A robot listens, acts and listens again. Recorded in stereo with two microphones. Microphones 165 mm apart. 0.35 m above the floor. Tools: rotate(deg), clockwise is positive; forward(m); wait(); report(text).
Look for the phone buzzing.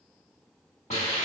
wait()
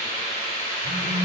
rotate(45)
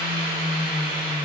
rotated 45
rotate(90)
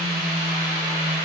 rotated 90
report("Facing the phone buzzing, 1 to 2 m away.")